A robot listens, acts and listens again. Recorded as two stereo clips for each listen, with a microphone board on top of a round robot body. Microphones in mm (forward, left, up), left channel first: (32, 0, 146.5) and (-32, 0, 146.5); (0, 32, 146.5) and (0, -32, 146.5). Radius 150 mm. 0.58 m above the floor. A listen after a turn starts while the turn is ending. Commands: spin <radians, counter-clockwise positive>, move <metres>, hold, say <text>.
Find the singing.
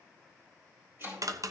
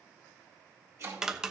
hold
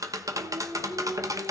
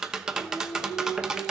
spin 2.71
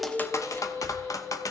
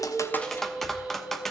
spin -0.17
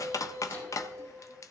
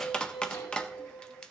spin 0.17
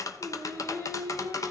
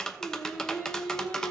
spin 0.17
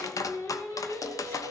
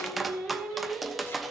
say Found it: singing, straight ahead, over 4 m away.